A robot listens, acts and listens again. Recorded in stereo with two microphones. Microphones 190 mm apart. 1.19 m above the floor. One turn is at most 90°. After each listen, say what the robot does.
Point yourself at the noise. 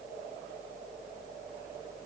Keep listening.
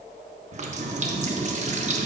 Turn 35° right.
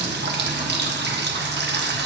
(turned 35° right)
Turn 90° right.
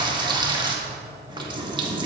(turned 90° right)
Turn 25° right.
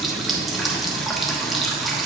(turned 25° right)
Found it: a running tap, straight ahead, 1 to 2 m away.